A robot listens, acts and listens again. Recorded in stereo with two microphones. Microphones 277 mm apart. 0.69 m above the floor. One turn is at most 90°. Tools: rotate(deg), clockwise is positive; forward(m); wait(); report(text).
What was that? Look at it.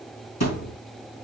rotate(-70)
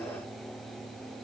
wait()
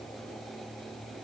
report("I heard a thud, but can't make it out now. It was about straight ahead or 40° left.")